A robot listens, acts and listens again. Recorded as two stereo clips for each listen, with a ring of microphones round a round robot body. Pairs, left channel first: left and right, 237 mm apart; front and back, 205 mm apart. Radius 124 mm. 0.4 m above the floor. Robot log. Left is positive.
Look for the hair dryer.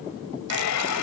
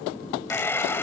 note: The hair dryer: 80° left.
cmd yaw +80
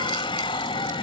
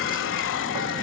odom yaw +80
note: The hair dryer is now 20° left.
cmd yaw +20
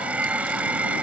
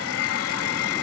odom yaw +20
end: Facing the hair dryer.